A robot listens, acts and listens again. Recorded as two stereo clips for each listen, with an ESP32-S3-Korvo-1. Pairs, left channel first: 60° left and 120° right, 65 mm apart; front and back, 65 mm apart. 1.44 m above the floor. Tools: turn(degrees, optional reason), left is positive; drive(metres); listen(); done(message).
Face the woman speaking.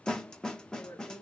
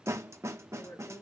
turn(degrees=35, reason="The woman speaking: 35° left.")
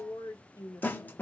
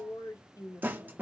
turn(degrees=25, reason="The woman speaking is now 25° left.")
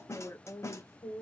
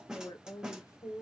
turn(degrees=25, reason="The woman speaking is now 25° left.")
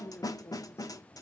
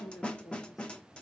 turn(degrees=10, reason="The woman speaking is now 10° left.")
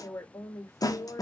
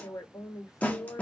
turn(degrees=30, reason="The woman speaking is now 30° left.")
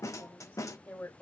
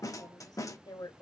done("Found it: a woman speaking, straight ahead.")